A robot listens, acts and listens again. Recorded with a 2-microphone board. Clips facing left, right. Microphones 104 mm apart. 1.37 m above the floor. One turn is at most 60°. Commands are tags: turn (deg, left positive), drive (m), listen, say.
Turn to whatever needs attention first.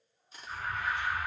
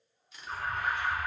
<turn deg="-50"/>
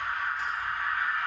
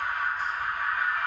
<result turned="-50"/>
<turn deg="-60"/>
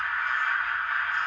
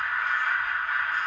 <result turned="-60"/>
<turn deg="-20"/>
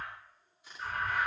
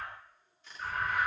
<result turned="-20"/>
<say>Facing the alarm, 2 to 4 m away.</say>